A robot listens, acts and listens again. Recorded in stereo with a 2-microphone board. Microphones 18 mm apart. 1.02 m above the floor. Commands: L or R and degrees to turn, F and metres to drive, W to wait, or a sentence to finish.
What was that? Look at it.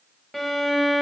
L30
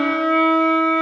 L135
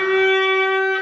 R10
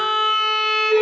Found it: a violin, straight ahead, under 1 m away.